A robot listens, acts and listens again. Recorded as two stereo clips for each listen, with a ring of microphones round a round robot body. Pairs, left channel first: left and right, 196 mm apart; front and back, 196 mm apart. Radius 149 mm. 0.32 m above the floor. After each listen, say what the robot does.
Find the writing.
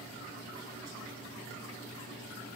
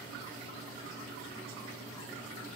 Keep listening.
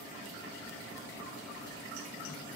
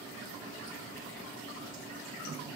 Keep listening.
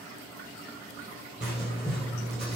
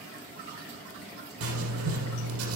Turn 175° right.
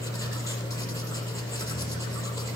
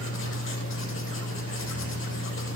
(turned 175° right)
Turn 15° left.
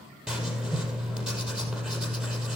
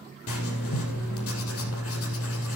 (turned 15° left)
Facing the writing.